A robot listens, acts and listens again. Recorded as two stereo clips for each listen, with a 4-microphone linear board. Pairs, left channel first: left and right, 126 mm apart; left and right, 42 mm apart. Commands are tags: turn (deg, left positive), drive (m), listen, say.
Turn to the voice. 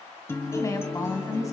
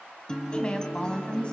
<turn deg="25"/>
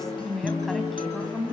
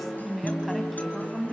<say>Found it: a woman speaking, straight ahead, 2 to 4 m away.</say>